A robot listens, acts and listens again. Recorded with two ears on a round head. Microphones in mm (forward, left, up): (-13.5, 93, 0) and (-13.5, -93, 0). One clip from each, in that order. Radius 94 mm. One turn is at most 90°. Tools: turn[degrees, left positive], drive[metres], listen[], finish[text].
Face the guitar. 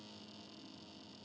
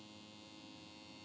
Action: listen[]
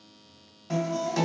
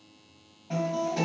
Thought: The guitar: about 60° left or 120° left.
Action: turn[60]
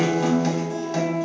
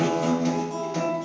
Thought: So it is at 55° left.
Action: turn[55]
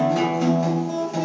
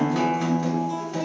Action: finish[Facing the guitar.]